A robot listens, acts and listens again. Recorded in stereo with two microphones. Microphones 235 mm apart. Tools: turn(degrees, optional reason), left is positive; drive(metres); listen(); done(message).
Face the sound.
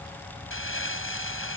turn(degrees=60, reason="The crumpling: about 60° left or 120° left.")
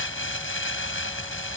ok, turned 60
turn(degrees=60, reason="So it is at 60° left.")
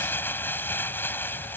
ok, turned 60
turn(degrees=10, reason="The crumpling is now 10° left.")
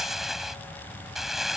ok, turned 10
done("Found it: crumpling, straight ahead.")